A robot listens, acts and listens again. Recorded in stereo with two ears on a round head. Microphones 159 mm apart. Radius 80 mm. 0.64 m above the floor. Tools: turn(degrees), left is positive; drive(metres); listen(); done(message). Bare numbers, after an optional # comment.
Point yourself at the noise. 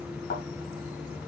# The thud: about 50° left or 130° left.
turn(50)
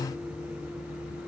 listen()
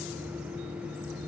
done("I heard a thud, but can't make it out now. It was about straight ahead or 80° left.")